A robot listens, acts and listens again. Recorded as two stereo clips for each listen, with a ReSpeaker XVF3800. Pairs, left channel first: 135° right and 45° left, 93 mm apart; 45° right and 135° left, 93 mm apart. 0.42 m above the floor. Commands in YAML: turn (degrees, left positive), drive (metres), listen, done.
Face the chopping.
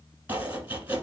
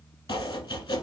turn: -25
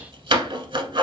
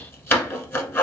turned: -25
turn: 20
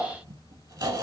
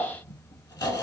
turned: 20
done: "Found it: chopping, straight ahead, under 1 m away."